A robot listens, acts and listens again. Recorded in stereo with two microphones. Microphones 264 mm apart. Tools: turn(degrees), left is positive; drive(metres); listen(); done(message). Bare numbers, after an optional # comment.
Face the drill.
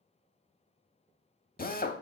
# The drill: about 35° left or 145° left.
turn(35)
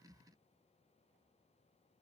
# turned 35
listen()
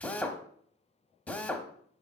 done("Found it: a drill, straight ahead, under 1 m away.")